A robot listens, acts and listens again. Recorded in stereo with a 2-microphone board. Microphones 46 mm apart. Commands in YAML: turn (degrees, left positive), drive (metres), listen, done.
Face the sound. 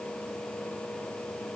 listen: true
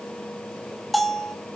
turn: 30
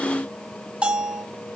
turn: -35
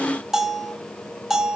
turn: -15
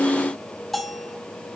done: "Facing the bell."